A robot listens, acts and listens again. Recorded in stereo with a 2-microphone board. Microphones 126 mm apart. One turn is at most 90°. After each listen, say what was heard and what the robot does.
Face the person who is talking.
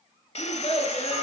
The child speaking: about 50° left or 130° left. Turn 50° left.
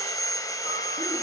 Keep listening.
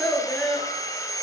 Facing the child speaking.